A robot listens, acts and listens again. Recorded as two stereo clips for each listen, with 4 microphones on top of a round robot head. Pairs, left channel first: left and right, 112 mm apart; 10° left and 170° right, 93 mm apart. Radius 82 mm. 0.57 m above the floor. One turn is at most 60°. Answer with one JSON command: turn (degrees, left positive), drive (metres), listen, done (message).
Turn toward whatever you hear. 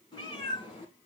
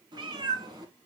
{"turn": 60}
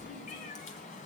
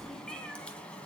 {"turn": 60}
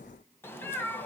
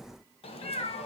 {"turn": 15}
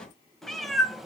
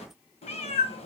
{"done": "Facing the cat meowing."}